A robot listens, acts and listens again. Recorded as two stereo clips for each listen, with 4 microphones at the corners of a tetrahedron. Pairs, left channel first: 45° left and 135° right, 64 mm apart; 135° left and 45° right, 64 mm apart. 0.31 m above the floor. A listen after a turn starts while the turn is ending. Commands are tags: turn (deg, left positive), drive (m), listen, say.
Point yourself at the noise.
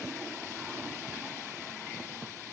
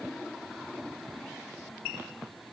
<listen/>
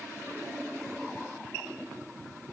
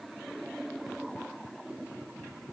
<listen/>
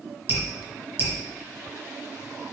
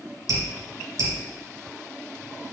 <turn deg="-75"/>
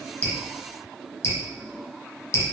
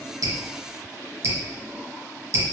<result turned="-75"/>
<say>Found it: dripping, straight ahead.</say>